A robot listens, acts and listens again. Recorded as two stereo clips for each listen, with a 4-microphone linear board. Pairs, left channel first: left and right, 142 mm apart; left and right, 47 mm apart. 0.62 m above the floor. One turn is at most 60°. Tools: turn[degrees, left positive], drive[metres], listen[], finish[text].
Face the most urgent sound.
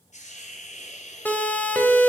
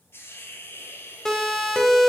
Action: turn[30]
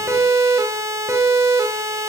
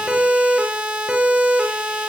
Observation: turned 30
Thought: So it is at 20° right.
Action: turn[-20]
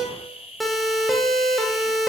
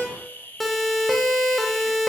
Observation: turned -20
Action: finish[Facing the siren.]